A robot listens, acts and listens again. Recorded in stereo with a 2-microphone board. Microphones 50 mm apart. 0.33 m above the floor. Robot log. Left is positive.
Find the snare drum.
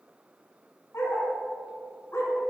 cmd idle
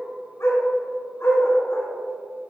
cmd idle
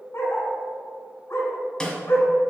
note: The snare drum: about 20° left or 160° left.
cmd yaw +20
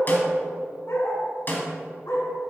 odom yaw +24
note: So it is at 135° left.
cmd yaw +135
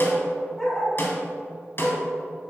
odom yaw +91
note: The snare drum is now 50° left.
cmd yaw +50
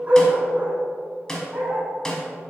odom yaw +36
note: The snare drum is now 10° left.
cmd yaw +10
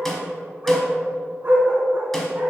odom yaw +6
end: Found it: a snare drum, straight ahead.